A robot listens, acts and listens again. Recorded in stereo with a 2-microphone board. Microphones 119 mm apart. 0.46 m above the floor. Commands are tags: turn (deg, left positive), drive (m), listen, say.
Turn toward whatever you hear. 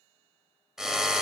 <turn deg="-30"/>
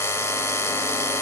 <turn deg="25"/>
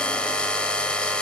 <turn deg="10"/>
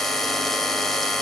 <say>Facing the drill.</say>